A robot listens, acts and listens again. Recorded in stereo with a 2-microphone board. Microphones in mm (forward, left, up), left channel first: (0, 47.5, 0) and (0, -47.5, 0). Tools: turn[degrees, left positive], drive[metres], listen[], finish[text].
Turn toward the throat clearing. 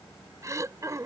Thought: The throat clearing: about 35° right or 145° right.
Action: turn[-35]
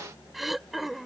Action: finish[Found it: throat clearing, straight ahead.]